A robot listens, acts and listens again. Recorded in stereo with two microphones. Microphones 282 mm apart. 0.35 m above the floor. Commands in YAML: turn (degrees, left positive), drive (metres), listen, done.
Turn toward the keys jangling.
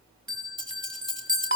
turn: 65
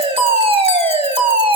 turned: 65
listen: true
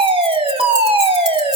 listen: true
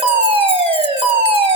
done: "I heard keys jangling, but can't make it out now. It was about straight ahead or 50° left."